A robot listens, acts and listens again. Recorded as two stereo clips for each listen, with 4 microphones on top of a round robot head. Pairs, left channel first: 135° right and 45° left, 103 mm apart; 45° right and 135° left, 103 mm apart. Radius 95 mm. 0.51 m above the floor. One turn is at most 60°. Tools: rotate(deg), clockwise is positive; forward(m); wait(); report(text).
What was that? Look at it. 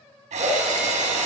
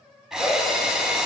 rotate(-50)
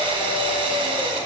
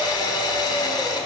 report("Facing the drill, 2 to 4 m away.")